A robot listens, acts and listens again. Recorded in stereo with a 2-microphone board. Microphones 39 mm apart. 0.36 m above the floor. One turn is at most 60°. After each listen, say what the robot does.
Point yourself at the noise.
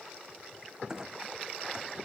Turn 15° right.
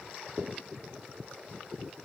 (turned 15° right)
Keep listening.
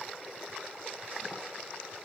I heard a clunk, but can't make it out now. It was about straight ahead or 150° right.